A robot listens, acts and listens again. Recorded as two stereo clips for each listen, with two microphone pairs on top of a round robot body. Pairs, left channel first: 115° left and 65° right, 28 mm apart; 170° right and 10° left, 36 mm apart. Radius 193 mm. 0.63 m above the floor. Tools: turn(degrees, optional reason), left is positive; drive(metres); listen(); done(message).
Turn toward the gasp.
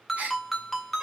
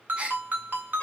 turn(degrees=-45, reason="The gasp: 45° right.")
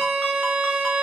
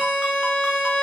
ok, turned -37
turn(degrees=-10, reason="Nothing new. It was at 10° right.")
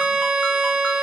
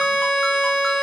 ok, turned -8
done("I heard a gasp from this way, but can't make it out now.")